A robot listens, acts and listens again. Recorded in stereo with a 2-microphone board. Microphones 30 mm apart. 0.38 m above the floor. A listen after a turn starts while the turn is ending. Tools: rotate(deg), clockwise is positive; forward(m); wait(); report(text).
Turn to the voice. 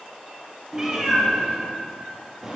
wait()
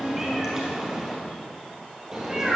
wait()
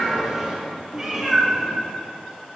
report("I can't make out anyone speaking to turn to.")